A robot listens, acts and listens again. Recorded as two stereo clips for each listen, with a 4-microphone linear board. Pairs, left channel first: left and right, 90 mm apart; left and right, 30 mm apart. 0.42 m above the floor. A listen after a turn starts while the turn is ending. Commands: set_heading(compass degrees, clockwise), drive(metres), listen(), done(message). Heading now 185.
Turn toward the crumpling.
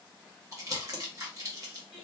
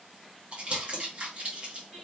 set_heading(225)
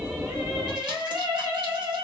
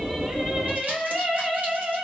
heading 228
listen()
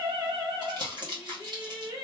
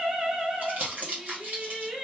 set_heading(318)
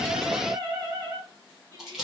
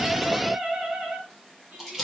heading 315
done("Found it: crumpling, straight ahead.")